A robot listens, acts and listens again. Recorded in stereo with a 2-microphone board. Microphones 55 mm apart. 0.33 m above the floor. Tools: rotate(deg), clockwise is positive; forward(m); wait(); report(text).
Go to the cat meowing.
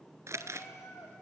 rotate(-90)
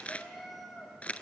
forward(1.0)
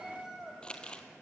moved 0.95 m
forward(1.0)
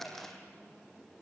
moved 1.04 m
wait()
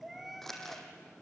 forward(1.0)
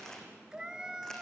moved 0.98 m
rotate(15)
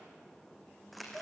forward(1.0)
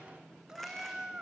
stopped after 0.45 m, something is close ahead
rotate(15)
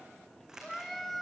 report("I am next to the cat meowing.")